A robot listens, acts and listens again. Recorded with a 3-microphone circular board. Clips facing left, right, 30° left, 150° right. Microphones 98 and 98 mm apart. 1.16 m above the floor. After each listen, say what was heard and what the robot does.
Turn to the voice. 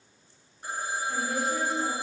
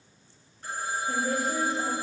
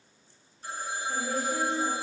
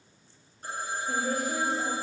The woman speaking: 120° right. Turn 120° right.
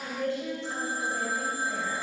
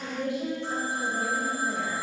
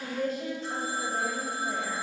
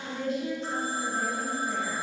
The woman speaking is now 15° right. Turn 15° right.
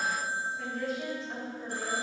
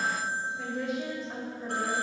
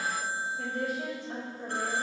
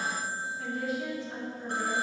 Found it: a woman speaking, straight ahead, 2 to 4 m away.